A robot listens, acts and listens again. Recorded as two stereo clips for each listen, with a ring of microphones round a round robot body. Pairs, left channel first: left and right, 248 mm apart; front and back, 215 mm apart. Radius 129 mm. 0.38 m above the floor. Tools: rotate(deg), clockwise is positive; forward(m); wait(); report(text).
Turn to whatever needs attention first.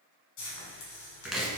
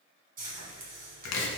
wait()
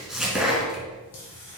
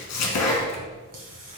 wait()
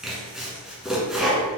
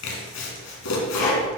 report("I can't make out anything urgent to turn to.")